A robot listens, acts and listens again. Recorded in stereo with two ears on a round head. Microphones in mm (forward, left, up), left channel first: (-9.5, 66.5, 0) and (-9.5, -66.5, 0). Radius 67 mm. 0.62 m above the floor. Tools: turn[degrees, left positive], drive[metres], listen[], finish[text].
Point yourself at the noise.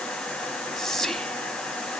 Action: turn[30]
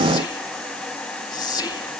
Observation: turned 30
Thought: So it is at 150° left.
Action: turn[150]
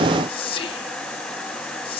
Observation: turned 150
Thought: The whispering is now 45° left.
Action: turn[45]
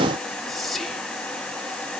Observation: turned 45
Action: finish[Found it: whispering, straight ahead.]